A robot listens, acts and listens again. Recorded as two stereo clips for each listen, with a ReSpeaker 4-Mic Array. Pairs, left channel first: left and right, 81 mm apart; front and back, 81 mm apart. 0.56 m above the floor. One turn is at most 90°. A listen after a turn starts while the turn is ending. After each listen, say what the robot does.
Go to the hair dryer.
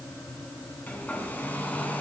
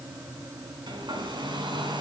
Turn 90° left.
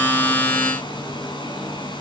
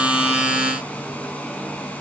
Turn 70° left.
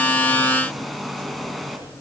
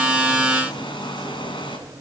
Drive 1.0 m forward.
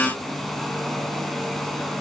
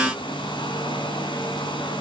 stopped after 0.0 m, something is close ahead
Blocked. The hair dryer is further on, straight ahead.